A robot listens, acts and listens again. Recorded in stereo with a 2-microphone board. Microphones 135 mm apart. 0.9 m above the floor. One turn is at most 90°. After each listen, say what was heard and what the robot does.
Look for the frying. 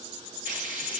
The frying: about 75° right or 105° right. Turn 75° right.
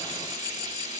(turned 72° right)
So it is at 35° right. Turn 35° right.
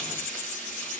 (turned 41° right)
Facing the frying.